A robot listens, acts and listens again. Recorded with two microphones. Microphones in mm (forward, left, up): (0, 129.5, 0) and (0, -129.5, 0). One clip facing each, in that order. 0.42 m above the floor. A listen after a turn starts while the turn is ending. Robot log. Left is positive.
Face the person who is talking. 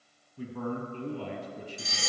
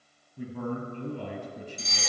note: The man speaking: about 60° right or 120° right.
cmd yaw -60
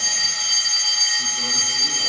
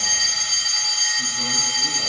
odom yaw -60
cmd idle
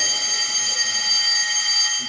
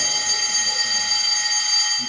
cmd idle
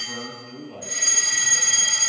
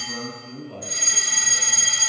note: So it is at 55° right.
cmd yaw -55
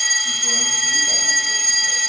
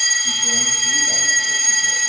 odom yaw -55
cmd idle
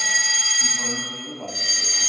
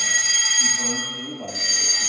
end: Facing the man speaking.